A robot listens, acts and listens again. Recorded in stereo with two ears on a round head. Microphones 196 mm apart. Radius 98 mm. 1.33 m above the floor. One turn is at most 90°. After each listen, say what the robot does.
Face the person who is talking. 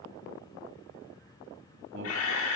Turn 55° right.
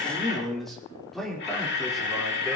Found it: a man speaking, straight ahead.